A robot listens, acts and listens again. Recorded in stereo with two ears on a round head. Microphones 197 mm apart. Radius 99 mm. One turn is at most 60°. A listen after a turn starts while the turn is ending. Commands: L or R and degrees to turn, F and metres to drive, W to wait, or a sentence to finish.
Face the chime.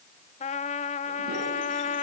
W
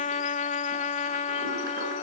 W
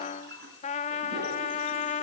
I can't make out a chime, only a toilet flushing and a trumpet.